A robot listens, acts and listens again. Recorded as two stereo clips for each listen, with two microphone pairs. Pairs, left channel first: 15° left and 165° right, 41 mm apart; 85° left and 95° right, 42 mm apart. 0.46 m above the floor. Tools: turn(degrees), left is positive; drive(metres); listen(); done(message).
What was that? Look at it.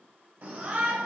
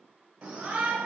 turn(degrees=-155)
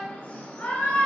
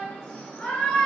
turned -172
turn(degrees=15)
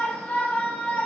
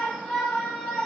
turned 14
done("Found it: a shout, straight ahead, 1 to 2 m away.")